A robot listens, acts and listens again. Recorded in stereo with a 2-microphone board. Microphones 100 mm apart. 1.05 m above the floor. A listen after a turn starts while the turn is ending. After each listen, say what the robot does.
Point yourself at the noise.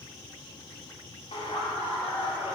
Turn 90° left.
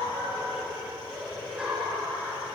Turn 10° right.
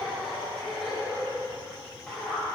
Found it: laughter, straight ahead.